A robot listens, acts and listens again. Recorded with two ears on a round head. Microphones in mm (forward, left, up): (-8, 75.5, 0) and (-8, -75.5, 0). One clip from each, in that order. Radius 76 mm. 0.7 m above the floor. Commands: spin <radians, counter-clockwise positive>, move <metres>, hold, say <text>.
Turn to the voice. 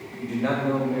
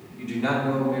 spin -0.87
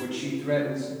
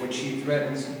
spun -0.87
spin -0.35
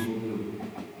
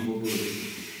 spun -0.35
spin -0.17
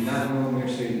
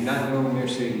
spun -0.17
spin -0.35
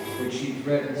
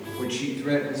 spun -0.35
spin -0.44
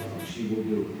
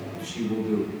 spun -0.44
spin -0.44
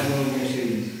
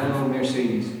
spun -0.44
say Facing the man speaking.